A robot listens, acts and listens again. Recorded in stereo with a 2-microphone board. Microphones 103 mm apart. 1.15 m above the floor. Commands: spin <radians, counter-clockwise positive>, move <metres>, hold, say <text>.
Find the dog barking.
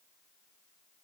hold
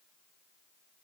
hold
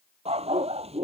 spin -1.57
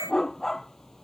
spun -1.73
say Facing the dog barking.